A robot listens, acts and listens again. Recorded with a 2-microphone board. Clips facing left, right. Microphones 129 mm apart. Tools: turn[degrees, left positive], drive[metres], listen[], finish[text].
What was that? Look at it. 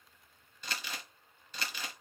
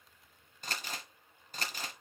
Thought: The crumpling: about 45° right or 135° right.
Action: turn[-45]
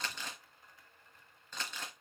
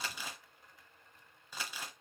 Thought: So it is at 10° right.
Action: turn[-10]
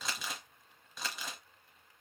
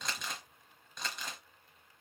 Action: finish[Found it: crumpling, straight ahead.]